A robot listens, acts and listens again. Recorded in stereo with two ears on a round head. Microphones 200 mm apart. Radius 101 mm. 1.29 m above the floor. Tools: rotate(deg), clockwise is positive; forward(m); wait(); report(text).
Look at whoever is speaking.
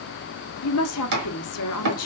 rotate(-90)
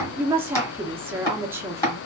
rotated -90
rotate(10)
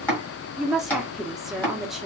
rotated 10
report("Found it: a woman speaking, straight ahead.")